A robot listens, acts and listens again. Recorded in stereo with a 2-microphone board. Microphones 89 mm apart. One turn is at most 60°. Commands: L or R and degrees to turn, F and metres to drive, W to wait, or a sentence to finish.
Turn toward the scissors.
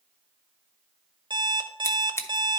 L30
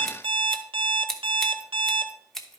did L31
Found it: scissors, straight ahead.